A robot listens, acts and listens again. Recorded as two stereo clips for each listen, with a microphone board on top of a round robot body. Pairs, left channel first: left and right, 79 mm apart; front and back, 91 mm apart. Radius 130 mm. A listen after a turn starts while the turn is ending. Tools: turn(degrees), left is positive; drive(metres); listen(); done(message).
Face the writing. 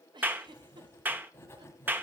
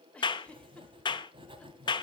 turn(degrees=155)
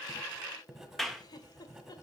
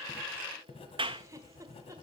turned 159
done("Found it: writing, straight ahead, 1 to 2 m away.")